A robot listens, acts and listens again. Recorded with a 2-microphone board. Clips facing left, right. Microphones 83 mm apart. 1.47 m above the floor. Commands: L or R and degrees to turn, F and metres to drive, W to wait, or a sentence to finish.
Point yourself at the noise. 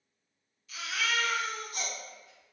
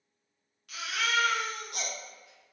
R65
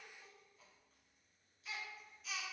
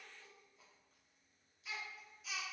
Found it: a baby crying, straight ahead, under 1 m away.